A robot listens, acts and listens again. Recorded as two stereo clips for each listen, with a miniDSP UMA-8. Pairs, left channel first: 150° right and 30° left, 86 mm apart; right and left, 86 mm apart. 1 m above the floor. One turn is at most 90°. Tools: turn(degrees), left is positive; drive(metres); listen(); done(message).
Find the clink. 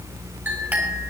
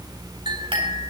turn(degrees=90)
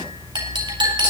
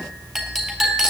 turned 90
done("Facing the clink, over 4 m away.")